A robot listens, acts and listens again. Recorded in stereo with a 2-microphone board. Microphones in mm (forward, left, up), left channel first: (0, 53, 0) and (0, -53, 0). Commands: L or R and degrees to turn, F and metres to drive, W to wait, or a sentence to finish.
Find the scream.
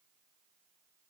W
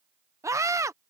R30
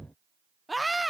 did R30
Facing the scream.